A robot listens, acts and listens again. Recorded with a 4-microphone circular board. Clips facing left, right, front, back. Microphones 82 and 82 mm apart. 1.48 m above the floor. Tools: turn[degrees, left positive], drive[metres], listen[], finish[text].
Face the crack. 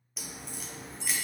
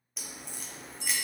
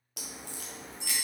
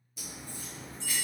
Action: finish[Found it: a crack, straight ahead.]